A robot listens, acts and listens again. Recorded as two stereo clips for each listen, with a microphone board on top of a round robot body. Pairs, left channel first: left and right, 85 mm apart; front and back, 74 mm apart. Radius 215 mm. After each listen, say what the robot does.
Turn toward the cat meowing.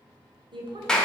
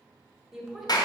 Keep listening.
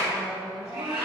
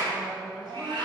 Turn 160° right.
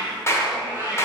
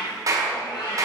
Turn 20° right.
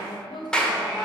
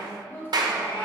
Facing the cat meowing, over 4 m away.